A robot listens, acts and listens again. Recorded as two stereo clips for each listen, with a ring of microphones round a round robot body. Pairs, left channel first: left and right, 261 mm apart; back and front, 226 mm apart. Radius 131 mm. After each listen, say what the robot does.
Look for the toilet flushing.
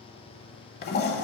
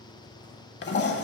Turn 140° left.
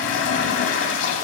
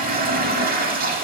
Turn 50° left.
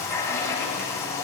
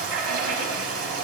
Turn 10° left.
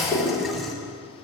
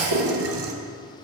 Facing the toilet flushing.